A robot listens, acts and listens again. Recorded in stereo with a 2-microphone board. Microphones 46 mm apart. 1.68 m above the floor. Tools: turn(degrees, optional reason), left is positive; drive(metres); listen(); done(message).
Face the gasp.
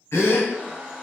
turn(degrees=90)
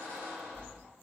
done("Facing where the gasp came from. I can't hear it now.")